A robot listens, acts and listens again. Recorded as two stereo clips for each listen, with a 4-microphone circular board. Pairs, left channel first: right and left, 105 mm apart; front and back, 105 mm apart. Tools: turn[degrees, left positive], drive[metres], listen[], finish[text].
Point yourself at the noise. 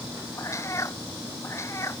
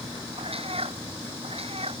Thought: The cat meowing: 155° right.
Action: turn[-155]
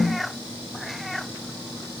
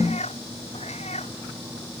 Action: finish[Found it: a cat meowing, straight ahead.]